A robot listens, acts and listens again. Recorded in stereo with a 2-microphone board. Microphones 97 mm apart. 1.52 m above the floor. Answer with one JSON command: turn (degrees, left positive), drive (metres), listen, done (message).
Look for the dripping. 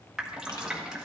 {"turn": -30}
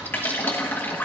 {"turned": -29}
{"turn": 20}
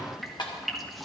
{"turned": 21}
{"done": "Found it: dripping, straight ahead, 1 to 2 m away."}